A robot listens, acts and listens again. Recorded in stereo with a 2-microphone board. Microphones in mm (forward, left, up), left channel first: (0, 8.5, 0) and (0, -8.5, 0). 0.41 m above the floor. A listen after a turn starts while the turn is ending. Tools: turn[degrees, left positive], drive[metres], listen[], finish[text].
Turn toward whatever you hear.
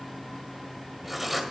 Action: turn[-30]
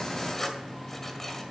Thought: So it is at 15° left.
Action: turn[15]
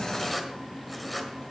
Action: finish[Found it: writing, straight ahead, 1 to 2 m away.]